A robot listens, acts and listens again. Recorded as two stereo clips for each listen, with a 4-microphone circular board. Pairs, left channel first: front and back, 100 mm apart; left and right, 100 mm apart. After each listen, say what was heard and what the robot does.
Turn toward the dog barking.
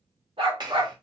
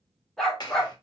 The dog barking: straight behind. Turn 180° left.
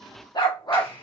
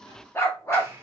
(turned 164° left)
The dog barking is now 35° left. Turn 35° left.
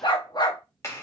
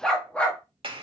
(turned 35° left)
The dog barking is now 15° left. Turn 15° left.
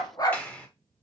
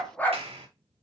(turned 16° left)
The dog barking is now 25° left. Turn 25° left.
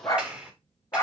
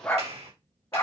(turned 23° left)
The dog barking is now 45° left. Turn 45° left.
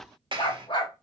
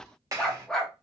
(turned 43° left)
Found it: a dog barking, straight ahead.